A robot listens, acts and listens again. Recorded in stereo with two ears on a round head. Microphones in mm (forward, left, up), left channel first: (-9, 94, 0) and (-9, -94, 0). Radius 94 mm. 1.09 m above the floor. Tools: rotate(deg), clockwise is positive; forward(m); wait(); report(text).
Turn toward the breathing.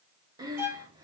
rotate(20)
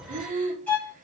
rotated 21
rotate(140)
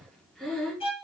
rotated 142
report("Found it: breathing, straight ahead.")